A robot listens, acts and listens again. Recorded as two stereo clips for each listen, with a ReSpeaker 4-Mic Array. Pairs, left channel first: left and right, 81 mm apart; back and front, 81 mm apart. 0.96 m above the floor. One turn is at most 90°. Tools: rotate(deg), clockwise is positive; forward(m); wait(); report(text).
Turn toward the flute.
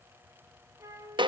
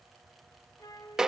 rotate(90)
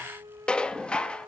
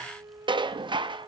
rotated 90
rotate(45)
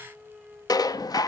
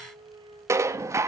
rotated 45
report("Found it: a flute, straight ahead, 1 to 2 m away.")